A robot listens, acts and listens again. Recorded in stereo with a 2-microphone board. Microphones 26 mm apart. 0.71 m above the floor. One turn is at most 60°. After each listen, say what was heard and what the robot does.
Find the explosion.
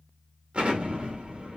The explosion: about 45° right or 135° right. Turn 45° right.
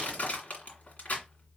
Keep listening.
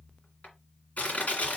I heard an explosion, but can't make it out now. It was about straight ahead or 90° right.